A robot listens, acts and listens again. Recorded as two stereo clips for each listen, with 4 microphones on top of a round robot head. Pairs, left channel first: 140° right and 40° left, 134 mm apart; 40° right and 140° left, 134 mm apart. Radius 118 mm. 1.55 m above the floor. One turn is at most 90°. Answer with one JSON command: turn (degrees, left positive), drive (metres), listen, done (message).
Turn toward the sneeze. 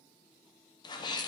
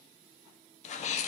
{"turn": -80}
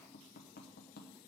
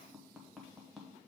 {"done": "Facing where the sneeze came from. I can't hear it now."}